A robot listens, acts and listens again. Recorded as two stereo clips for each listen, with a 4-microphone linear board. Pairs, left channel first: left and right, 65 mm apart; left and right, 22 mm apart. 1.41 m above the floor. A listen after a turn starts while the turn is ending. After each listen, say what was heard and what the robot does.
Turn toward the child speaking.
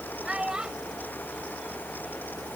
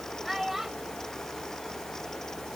Turn 30° right.
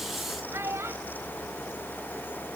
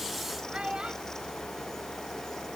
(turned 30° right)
So it is at 140° right. Turn 140° right.
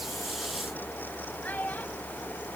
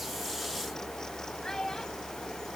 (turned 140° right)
The child speaking is now 25° left. Turn 25° left.
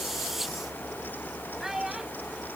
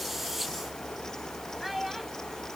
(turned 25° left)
Found it: a child speaking, straight ahead.